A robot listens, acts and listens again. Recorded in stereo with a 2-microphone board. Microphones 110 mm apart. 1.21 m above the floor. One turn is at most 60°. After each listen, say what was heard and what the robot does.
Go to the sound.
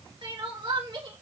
The crying: about 45° right or 135° right. Turn 45° right.
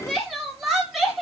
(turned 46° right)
Drive 1.0 m forward.
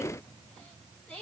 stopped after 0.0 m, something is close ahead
The crying is now 10° left. Turn 10° left.
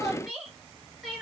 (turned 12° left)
Something is in my way. I am facing the crying but have not reached it.